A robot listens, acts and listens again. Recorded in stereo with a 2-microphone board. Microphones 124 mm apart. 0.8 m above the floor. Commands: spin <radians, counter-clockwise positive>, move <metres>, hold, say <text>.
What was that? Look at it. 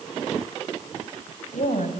spin 1.57
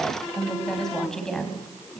spin 0.17
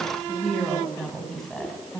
say Found it: a woman speaking, straight ahead, over 4 m away.